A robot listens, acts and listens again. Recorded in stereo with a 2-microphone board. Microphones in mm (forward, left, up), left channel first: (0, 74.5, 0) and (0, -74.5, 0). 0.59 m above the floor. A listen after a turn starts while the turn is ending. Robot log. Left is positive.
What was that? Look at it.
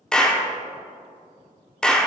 cmd yaw +30
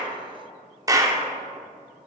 note: So it is at 25° right.
cmd yaw -25
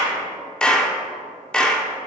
end: Facing the clap.